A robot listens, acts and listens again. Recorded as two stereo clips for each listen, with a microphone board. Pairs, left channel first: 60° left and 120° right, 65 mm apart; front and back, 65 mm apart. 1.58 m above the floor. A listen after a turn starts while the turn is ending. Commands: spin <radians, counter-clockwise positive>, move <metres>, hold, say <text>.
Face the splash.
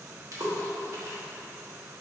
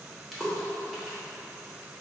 spin -1.57
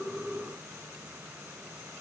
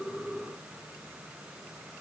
say Facing where the splash came from. I can't hear it now.